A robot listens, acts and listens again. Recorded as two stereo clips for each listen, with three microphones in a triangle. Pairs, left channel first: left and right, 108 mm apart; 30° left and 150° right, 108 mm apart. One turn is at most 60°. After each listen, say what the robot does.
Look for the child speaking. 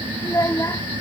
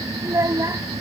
Turn 60° left.
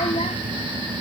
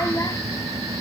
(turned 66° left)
Turn 60° left.
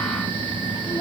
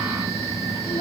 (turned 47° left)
Turn 40° left.
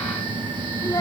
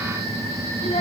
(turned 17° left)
Turn 20° left.
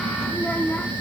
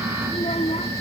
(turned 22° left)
Turn 15° left.
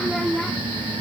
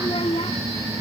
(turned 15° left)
Facing the child speaking.